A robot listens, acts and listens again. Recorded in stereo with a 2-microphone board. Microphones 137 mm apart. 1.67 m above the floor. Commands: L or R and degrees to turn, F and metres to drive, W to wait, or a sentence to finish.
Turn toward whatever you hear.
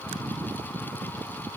W
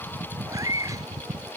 R25
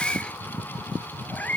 L15
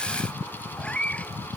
L10
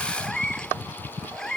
Facing the cat meowing.